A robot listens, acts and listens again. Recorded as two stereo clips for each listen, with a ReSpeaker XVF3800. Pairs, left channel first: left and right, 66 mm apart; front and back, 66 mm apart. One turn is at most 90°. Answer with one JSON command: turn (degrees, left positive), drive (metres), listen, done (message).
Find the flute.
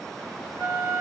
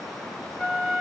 {"turn": 80}
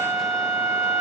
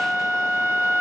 {"turn": 40}
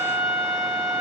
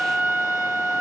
{"turn": 25}
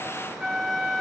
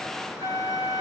{"turn": 10}
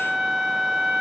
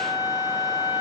{"done": "Found it: a flute, straight ahead, 2 to 4 m away."}